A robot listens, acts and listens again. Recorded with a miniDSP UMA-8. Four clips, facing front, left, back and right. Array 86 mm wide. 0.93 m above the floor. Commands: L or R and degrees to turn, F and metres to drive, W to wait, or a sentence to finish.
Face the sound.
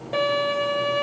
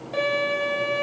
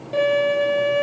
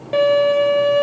R75
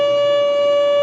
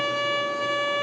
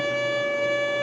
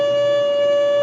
R10
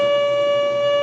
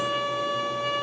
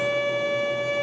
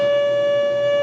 Found it: a violin, straight ahead, over 4 m away.